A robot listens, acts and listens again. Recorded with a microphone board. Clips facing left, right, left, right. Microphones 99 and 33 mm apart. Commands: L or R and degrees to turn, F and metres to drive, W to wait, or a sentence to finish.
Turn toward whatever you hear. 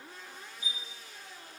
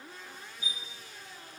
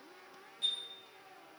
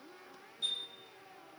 L50
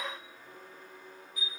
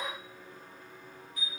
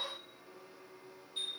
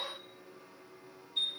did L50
Found it: a chime, straight ahead, 1 to 2 m away.